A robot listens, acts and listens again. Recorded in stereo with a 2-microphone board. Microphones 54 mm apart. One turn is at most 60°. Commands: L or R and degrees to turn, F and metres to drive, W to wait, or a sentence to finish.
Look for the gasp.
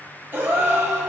R35
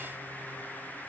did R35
W
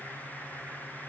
I heard a gasp, but can't make it out now. It was about straight ahead or 110° right.